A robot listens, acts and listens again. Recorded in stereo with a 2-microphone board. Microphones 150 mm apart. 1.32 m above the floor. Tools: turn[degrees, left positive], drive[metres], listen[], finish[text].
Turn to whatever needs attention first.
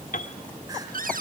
Action: listen[]
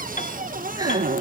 Action: listen[]
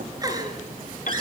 Thought: The crying: about 25° right or 155° right.
Action: turn[-25]
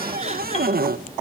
Action: listen[]
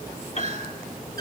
Thought: So it is at 130° right.
Action: turn[-130]
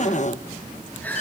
Thought: The crying is now 10° left.
Action: turn[10]
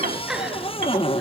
Action: finish[Found it: crying, straight ahead, over 4 m away.]